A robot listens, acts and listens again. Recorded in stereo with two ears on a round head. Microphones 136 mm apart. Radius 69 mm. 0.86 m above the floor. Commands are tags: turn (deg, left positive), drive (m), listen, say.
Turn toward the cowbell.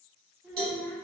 <turn deg="-70"/>
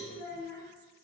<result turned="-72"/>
<listen/>
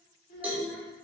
<turn deg="-10"/>
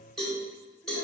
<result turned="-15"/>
<say>Facing the cowbell, 1 to 2 m away.</say>